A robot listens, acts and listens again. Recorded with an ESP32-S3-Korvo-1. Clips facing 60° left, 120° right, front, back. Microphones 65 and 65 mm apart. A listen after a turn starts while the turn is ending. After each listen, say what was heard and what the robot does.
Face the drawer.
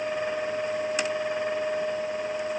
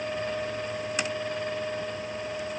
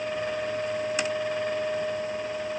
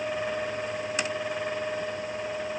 Keep listening.
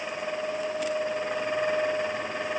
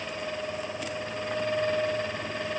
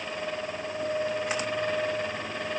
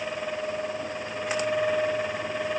Keep listening.
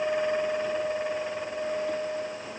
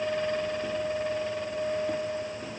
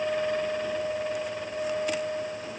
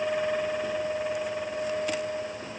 I can't make out a drawer to turn to.